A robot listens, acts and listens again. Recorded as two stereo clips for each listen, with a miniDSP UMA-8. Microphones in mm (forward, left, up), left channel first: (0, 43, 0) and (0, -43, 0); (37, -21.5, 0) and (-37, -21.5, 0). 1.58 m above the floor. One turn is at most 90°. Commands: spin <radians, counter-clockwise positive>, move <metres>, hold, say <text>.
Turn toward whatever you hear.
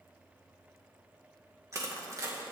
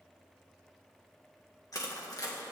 spin -0.61
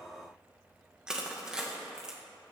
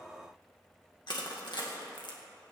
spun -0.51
spin -0.17
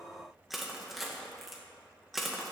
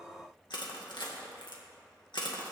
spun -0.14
say Found it: crushing, straight ahead.